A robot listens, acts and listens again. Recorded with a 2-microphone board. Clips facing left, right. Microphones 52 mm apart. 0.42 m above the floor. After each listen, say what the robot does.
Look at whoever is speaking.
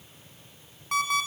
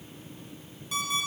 Keep listening.
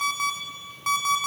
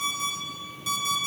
Keep listening.
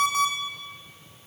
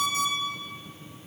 I can't make out anyone speaking, only an alarm clock.